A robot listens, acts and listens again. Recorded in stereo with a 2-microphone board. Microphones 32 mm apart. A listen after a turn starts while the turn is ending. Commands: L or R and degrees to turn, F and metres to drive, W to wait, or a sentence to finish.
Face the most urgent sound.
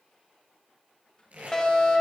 L20
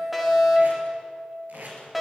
Found it: a fire alarm, straight ahead, 2 to 4 m away.